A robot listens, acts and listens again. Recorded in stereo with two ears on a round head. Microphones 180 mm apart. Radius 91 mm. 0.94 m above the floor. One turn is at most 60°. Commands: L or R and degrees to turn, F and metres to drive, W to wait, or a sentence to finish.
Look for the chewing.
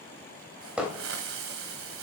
W
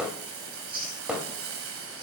R50
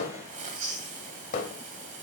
R60
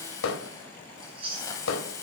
R25
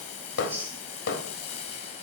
R10
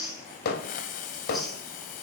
Found it: chewing, straight ahead, over 4 m away.